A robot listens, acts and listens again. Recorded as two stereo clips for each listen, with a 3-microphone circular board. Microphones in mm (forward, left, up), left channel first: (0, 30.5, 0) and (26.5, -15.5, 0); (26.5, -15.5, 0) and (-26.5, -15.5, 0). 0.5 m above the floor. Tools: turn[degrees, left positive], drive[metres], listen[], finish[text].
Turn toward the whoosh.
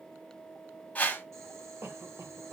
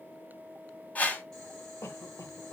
Thought: The whoosh: 60° left.
Action: turn[60]
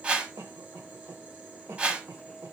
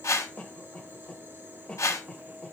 Thought: The whoosh is now 10° left.
Action: turn[10]
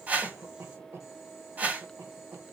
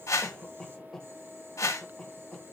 Action: finish[Found it: a whoosh, straight ahead.]